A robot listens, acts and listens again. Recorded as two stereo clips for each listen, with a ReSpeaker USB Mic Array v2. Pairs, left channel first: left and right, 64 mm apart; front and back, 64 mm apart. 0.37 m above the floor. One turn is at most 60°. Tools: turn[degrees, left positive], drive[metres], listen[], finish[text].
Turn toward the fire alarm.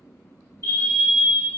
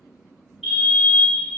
Thought: The fire alarm: 100° right.
Action: turn[-60]
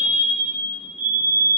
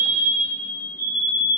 Thought: The fire alarm is now 40° right.
Action: turn[-40]
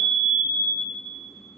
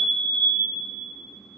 Thought: The fire alarm is now 10° right.
Action: turn[-10]
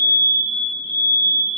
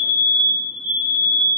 Action: finish[Found it: a fire alarm, straight ahead.]